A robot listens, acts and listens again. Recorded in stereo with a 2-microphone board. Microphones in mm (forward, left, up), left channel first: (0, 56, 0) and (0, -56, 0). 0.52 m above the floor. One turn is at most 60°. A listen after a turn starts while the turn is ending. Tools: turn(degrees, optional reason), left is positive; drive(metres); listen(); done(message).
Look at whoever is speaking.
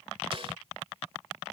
listen()
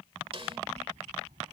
turn(degrees=-60)
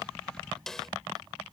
turn(degrees=-40, reason="So it is at 40° right.")
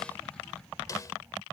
turn(degrees=-20, reason="The child speaking is now 20° right.")
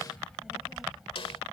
done("Found it: a child speaking, straight ahead.")